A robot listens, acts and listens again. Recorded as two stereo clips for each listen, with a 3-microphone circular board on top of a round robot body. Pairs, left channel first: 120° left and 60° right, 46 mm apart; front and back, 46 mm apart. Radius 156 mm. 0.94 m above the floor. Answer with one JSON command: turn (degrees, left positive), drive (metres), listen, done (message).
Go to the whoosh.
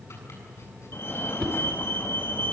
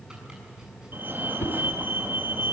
{"turn": 40}
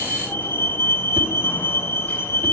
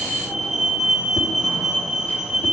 {"listen": true}
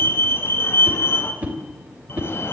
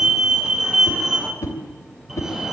{"drive": 1.0}
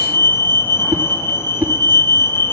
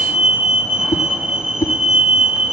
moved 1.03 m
{"turn": -10}
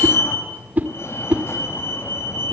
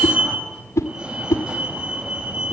{"drive": 1.0}
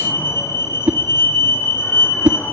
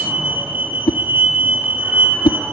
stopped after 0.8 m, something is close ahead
{"done": "Arrived at the whoosh, straight ahead."}